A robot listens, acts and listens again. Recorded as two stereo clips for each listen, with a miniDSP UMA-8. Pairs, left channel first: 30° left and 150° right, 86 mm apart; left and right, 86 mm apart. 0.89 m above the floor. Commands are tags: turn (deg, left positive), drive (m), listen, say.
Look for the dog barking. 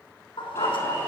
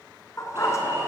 <turn deg="35"/>
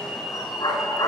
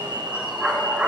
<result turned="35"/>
<turn deg="-10"/>
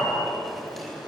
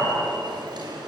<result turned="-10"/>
<listen/>
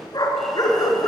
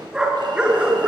<turn deg="-15"/>
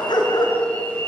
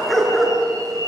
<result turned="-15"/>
<say>Facing the dog barking, 2 to 4 m away.</say>